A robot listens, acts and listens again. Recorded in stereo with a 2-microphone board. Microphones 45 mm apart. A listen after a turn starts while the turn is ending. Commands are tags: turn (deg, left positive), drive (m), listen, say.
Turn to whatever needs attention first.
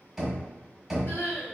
<turn deg="50"/>
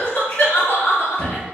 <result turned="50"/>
<turn deg="65"/>
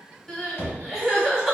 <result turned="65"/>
<say>Found it: crying, straight ahead, 1 to 2 m away.</say>